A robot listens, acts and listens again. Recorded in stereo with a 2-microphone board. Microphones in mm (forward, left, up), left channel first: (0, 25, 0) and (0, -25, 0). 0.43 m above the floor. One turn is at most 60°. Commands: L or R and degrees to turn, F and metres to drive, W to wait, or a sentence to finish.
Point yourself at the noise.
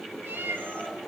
R40
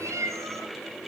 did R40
R60
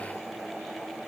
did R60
R45
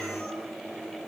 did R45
W
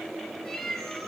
Facing the cat meowing, over 4 m away.